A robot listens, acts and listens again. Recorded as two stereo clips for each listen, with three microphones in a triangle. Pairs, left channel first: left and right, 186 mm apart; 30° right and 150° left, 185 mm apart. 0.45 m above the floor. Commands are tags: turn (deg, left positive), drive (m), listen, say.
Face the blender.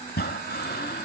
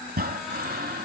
<listen/>
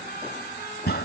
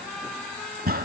<listen/>
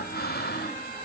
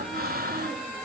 <say>I can't make out a blender, only breathing.</say>